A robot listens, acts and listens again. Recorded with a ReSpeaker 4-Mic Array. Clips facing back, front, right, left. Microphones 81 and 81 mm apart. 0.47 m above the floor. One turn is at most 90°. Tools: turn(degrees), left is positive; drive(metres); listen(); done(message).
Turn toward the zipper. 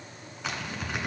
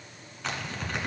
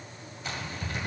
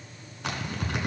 turn(degrees=90)
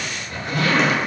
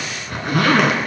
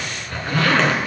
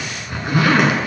turn(degrees=15)
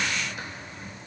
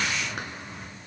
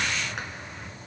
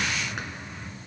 done("Facing the zipper, 1 to 2 m away.")